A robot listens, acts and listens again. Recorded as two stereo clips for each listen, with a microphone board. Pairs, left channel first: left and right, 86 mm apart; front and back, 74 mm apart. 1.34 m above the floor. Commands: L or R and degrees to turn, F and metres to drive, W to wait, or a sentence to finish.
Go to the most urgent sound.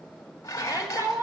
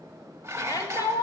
R35
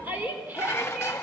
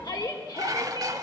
R20
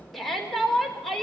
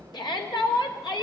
F1.0
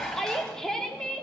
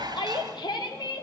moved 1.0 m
F1.0
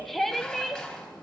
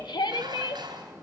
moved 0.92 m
F1.0
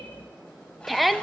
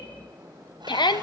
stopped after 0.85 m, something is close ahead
I am next to the shout.